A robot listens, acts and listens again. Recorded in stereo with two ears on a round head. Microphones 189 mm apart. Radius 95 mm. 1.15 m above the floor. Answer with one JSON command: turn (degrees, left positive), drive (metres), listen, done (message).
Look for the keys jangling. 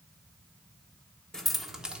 {"turn": -30}
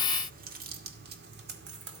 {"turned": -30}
{"turn": -120}
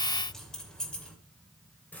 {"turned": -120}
{"turn": 10}
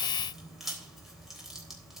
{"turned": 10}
{"done": "Found it: keys jangling, straight ahead."}